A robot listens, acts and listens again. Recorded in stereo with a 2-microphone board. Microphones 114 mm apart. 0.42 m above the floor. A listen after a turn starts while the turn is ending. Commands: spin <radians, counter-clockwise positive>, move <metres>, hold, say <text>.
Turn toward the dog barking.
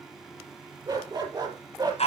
spin -0.70
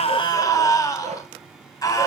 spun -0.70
spin -1.66
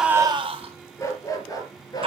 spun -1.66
spin 0.61
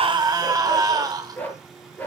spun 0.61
spin 0.26
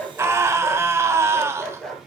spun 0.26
say Found it: a dog barking, straight ahead.